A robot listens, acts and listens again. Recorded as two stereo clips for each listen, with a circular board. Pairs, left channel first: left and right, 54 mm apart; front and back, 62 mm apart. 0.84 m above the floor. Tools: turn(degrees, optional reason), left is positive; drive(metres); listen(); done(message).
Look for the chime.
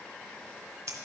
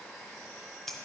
listen()
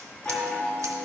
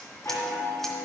turn(degrees=25, reason="The chime: 25° left.")
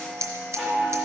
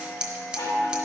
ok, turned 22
done("Facing the chime.")